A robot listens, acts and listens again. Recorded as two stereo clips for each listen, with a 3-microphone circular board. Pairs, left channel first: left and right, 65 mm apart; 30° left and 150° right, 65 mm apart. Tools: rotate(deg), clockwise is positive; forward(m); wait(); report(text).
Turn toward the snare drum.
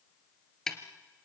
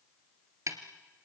rotate(-175)
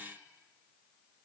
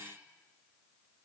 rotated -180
wait()
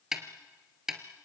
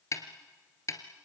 report("Facing the snare drum.")